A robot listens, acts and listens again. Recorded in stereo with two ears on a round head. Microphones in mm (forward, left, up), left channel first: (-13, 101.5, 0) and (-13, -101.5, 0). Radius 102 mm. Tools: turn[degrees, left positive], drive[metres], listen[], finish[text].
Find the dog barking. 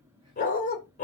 Thought: The dog barking: about 35° left or 145° left.
Action: turn[35]
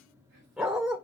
Action: finish[Found it: a dog barking, straight ahead, 2 to 4 m away.]